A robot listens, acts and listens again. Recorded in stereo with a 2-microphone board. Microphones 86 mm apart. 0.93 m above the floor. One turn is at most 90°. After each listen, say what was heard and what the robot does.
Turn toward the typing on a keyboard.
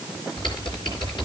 The typing on a keyboard: about 65° left or 115° left. Turn 65° left.
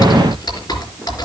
So it is at 50° left. Turn 50° left.
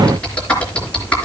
The typing on a keyboard is now 15° left. Turn 15° left.
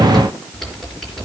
Facing the typing on a keyboard, 2 to 4 m away.